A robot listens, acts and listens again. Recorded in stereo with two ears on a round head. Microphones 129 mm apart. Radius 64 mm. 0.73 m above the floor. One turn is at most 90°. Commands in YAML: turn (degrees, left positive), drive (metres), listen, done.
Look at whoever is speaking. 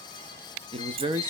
turn: -35
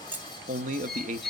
turn: -90
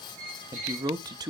turn: -30
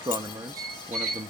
turn: -30
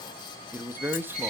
turn: -15
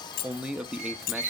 turn: -10
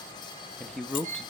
done: "Facing the man speaking, under 1 m away."